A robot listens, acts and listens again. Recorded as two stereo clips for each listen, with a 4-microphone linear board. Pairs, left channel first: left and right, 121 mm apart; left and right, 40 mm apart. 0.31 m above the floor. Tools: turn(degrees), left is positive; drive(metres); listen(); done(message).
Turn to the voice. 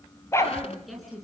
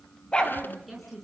turn(degrees=30)
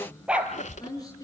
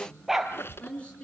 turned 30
turn(degrees=150)
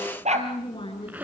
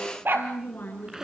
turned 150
turn(degrees=45)
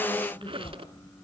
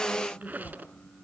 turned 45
turn(degrees=10)
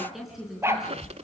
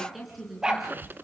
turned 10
done("Facing the woman speaking.")